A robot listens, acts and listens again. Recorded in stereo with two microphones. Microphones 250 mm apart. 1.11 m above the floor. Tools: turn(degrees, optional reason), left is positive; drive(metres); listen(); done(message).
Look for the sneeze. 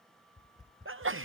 turn(degrees=-55, reason="The sneeze: about 55° right or 125° right.")
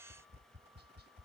listen()
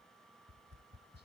done("I heard a sneeze, but can't make it out now. It was about straight ahead or 70° right.")